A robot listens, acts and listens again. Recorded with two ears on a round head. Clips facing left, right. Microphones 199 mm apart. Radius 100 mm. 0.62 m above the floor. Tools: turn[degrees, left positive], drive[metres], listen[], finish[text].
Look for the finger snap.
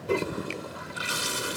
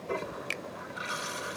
Thought: The finger snap: about 25° right or 155° right.
Action: turn[-25]
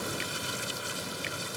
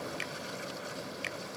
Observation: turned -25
Action: listen[]
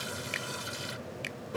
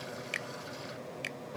Action: finish[Facing the finger snap.]